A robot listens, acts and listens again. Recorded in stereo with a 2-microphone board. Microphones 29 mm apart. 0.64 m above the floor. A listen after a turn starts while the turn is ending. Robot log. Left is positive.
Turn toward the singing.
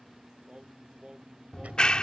note: The singing: about 30° right or 150° right.
cmd yaw -30
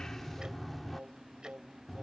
note: So it is at 120° right.
cmd yaw -120
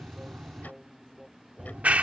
end: Facing the singing.